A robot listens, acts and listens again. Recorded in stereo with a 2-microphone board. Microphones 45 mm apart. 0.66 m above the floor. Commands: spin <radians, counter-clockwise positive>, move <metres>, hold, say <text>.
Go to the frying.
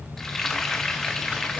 spin 0.52
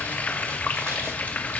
spin 2.44
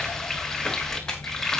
move 1.0
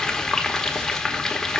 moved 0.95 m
spin 0.17
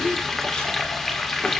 move 1.0
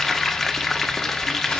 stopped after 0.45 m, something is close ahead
say Arrived at the frying, straight ahead.